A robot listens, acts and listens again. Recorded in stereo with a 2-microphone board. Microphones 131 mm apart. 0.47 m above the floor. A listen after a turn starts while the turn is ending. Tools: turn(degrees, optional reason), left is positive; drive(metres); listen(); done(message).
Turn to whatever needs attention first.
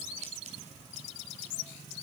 listen()
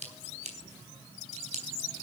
listen()
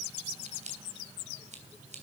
done("I can't make out anything urgent, only scissors.")